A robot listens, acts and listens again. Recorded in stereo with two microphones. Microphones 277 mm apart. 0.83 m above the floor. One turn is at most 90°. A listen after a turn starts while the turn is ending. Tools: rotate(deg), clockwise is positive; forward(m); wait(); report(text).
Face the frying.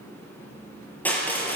wait()
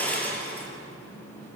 wait()
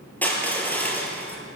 report("I can't make out frying to turn to.")